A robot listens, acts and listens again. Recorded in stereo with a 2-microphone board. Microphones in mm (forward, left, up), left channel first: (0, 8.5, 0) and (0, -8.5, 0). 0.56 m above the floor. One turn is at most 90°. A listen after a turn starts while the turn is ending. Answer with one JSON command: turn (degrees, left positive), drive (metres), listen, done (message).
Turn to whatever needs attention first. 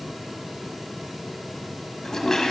{"listen": true}
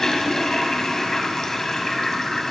{"listen": true}
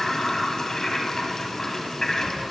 {"done": "I can't make out anything urgent, only a toilet flushing."}